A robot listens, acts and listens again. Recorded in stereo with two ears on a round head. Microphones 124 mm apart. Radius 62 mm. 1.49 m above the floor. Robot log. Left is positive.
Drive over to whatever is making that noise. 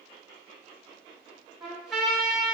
cmd yaw +30
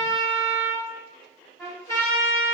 note: So it is at 150° left.
cmd yaw +150
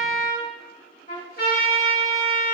note: The trumpet is now 70° left.
cmd yaw +70
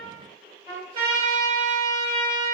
note: The trumpet is now 35° right.
cmd yaw -35
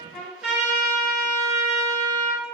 note: The trumpet is now 10° right.
cmd yaw -10
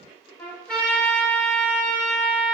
cmd fwd 1.0
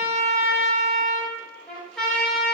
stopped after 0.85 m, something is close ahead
end: I am next to the trumpet.